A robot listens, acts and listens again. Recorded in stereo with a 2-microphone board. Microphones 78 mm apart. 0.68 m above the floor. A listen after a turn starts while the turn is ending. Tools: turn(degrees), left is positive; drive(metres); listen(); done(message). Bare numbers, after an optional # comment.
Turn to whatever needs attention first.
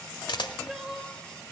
turn(-30)
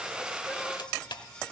listen()
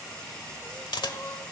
# So it is at 25° left.
turn(25)
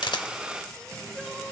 listen()
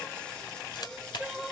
done("Found it: crying, straight ahead, 1 to 2 m away.")